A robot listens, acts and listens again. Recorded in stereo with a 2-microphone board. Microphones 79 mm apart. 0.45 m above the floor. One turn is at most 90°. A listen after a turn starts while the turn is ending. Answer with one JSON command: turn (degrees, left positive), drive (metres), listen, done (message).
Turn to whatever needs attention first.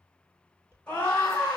{"turn": 15}
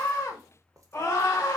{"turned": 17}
{"turn": 90}
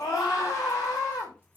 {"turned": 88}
{"turn": 55}
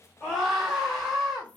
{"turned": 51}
{"done": "Facing the scream, 1 to 2 m away."}